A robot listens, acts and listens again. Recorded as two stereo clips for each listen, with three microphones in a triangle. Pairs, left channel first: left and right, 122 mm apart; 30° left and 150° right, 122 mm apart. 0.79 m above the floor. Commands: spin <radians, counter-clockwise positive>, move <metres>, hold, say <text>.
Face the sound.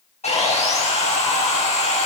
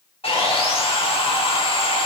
spin 1.13
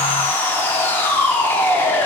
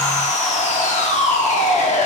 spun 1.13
spin 0.35
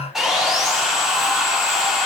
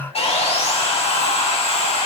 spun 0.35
say Found it: sawing, straight ahead.